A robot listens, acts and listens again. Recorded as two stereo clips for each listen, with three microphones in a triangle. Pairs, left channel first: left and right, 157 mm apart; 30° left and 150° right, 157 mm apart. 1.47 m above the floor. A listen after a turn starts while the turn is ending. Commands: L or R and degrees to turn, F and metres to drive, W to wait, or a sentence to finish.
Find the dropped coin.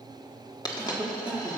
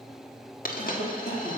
L30
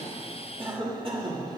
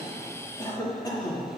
Facing where the dropped coin came from. I can't hear it now.